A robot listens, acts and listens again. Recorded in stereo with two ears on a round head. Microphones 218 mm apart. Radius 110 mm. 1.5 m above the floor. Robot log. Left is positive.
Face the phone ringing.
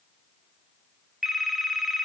cmd yaw +30
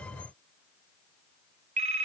note: So it is at 30° right.
cmd yaw -30
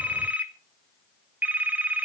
end: Facing the phone ringing, 1 to 2 m away.